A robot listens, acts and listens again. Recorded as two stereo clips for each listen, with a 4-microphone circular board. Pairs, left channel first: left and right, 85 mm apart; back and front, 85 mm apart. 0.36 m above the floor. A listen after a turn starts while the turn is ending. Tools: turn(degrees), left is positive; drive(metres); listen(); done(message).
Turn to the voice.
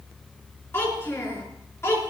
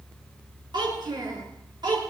turn(degrees=35)
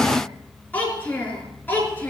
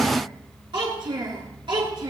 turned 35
turn(degrees=25)
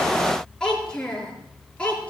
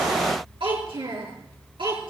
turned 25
turn(degrees=15)
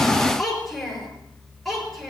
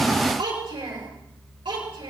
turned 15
done("Found it: a child speaking, straight ahead.")